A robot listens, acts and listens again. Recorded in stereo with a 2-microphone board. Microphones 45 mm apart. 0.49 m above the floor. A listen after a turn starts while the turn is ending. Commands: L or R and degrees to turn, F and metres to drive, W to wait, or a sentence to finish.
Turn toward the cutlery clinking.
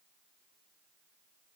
W
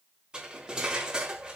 R20
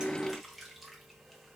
W
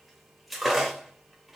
Facing the cutlery clinking.